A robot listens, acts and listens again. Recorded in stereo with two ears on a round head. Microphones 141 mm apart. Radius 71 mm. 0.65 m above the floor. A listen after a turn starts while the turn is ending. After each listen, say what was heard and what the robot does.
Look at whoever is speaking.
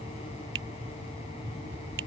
Keep listening.
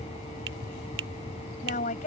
The woman speaking: about 55° left or 125° left. Turn 55° left.
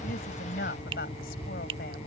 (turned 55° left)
So it is at 70° left. Turn 70° left.
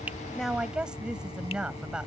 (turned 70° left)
Found it: a woman speaking, straight ahead.